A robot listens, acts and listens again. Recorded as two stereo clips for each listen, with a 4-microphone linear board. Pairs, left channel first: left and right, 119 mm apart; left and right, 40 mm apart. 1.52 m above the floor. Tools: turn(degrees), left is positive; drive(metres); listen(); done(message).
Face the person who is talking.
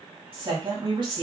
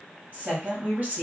turn(degrees=-40)
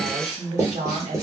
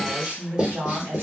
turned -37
turn(degrees=-100)
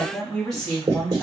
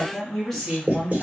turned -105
done("Found it: a woman speaking, straight ahead.")